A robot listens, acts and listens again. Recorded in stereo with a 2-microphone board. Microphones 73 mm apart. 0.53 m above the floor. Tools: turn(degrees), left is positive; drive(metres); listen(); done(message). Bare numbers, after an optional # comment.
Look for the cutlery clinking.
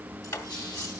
# The cutlery clinking: about 55° left or 125° left.
turn(55)
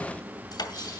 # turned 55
# So it is at 70° left.
turn(70)
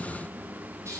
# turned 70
# The cutlery clinking is now 10° right.
turn(-10)
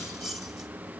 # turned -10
done("Found it: cutlery clinking, straight ahead.")